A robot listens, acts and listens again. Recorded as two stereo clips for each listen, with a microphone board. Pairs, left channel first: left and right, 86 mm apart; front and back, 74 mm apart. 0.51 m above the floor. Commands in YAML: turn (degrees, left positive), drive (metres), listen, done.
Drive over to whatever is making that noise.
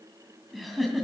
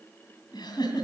drive: 1.0
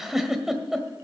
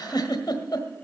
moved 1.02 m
drive: 1.0
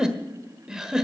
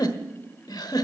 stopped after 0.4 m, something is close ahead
turn: -10
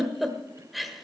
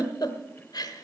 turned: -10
done: "Arrived at the giggle, straight ahead."